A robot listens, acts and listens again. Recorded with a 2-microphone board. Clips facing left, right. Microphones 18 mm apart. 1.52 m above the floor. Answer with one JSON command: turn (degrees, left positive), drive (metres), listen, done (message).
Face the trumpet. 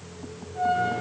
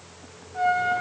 {"turn": -70}
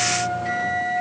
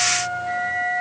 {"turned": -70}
{"turn": -20}
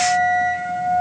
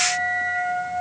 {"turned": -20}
{"done": "Facing the trumpet, under 1 m away."}